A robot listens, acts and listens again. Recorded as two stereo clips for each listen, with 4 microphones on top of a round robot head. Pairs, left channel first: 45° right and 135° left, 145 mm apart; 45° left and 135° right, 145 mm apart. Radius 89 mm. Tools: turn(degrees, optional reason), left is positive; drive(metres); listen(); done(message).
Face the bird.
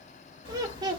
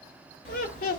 done("Found it: a bird, straight ahead.")